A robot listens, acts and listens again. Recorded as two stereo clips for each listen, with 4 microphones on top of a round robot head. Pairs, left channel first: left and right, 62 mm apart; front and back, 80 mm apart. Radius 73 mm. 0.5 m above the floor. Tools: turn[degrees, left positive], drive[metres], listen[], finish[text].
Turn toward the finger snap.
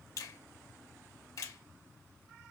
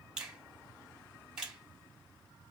Thought: The finger snap: 100° left.
Action: turn[100]
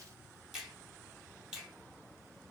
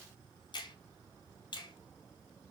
Action: finish[Facing the finger snap, 1 to 2 m away.]